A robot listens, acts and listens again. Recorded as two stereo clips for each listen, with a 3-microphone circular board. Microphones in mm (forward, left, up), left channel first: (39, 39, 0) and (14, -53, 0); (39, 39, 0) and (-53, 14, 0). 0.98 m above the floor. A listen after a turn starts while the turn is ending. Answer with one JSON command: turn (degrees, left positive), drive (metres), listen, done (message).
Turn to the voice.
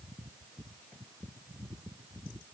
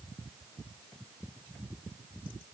{"listen": true}
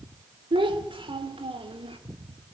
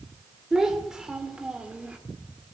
{"turn": -85}
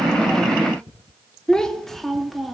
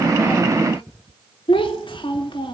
{"turn": -15}
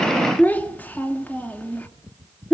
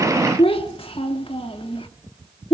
{"done": "Found it: a child speaking, straight ahead."}